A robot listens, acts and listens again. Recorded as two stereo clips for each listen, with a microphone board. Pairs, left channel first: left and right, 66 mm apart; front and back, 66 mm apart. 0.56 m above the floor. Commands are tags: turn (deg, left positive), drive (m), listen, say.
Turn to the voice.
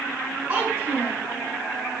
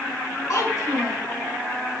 <turn deg="-30"/>
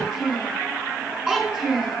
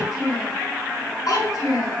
<say>Facing the child speaking, 2 to 4 m away.</say>